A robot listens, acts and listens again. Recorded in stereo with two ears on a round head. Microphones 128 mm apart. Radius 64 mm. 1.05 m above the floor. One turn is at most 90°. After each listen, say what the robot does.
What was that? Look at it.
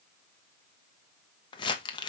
Turn 35° left.
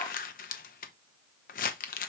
Turn 90° left.
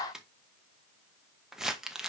Facing the crumpling.